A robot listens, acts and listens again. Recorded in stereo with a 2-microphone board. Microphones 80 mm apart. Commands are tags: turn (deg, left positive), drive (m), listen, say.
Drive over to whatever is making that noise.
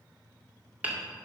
<turn deg="-20"/>
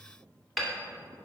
<drive m="1.0"/>
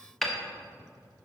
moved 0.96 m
<drive m="1.0"/>
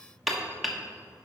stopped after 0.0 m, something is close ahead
<say>Arrived at the hammering, straight ahead.</say>